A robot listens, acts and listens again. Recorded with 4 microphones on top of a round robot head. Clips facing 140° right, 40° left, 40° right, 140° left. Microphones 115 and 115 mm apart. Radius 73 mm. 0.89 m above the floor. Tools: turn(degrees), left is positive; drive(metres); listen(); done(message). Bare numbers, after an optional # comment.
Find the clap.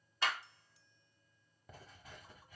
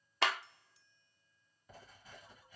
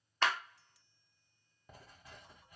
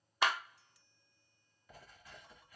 # The clap: 60° left.
turn(60)
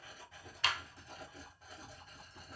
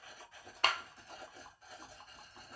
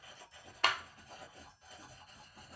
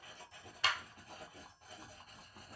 done("Facing the clap, under 1 m away.")